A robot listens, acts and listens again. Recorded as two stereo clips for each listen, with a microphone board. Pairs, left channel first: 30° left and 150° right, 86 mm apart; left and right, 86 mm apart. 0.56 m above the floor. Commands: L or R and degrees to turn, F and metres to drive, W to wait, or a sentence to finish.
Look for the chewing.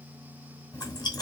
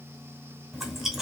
Facing the chewing.